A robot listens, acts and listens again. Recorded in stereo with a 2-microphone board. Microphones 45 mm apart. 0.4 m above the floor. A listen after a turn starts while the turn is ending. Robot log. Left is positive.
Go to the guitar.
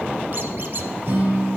note: The guitar: about 60° right or 120° right.
cmd yaw -60
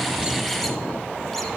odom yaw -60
cmd idle
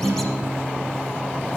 note: So it is at 60° right.
cmd yaw -60
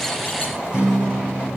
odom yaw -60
note: The guitar is now 20° right.
cmd yaw -20
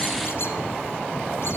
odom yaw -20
cmd idle
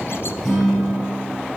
cmd fwd 1.0
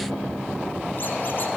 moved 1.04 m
cmd idle
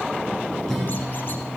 note: The guitar is now 10° left.
cmd yaw +10
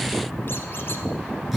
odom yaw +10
cmd fwd 1.0
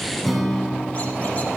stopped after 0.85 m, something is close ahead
end: I am next to the guitar.